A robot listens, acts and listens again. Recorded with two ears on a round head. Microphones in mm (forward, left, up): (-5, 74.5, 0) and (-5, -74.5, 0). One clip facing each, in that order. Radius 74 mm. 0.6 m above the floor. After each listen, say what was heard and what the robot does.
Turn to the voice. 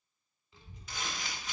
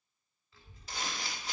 The child speaking: about 15° left or 165° left. Turn 15° left.
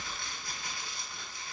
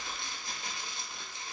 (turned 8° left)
The child speaking: about 25° left or 155° left. Turn 25° left.
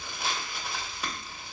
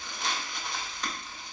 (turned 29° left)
So it is at 125° left. Turn 125° left.
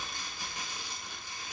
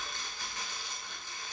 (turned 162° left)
The child speaking is now 35° right. Turn 35° right.
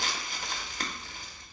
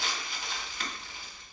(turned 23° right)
The child speaking is now 10° right. Turn 10° right.
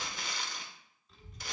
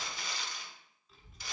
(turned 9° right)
Found it: a child speaking, straight ahead.